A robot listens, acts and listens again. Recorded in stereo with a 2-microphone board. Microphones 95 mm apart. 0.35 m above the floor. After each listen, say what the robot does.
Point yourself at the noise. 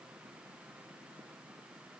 Keep listening.
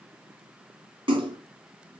Turn 70° right.
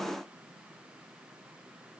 Keep listening.
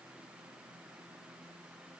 I heard a splash, but can't make it out now. It was about straight ahead or 40° right.